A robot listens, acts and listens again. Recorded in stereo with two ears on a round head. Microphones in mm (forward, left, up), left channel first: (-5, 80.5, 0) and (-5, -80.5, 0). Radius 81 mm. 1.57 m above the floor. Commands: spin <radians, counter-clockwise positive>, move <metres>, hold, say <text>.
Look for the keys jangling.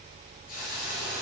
hold
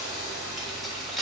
spin 0.52
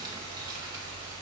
hold
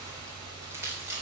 spin -0.26
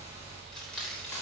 say Found it: keys jangling, straight ahead.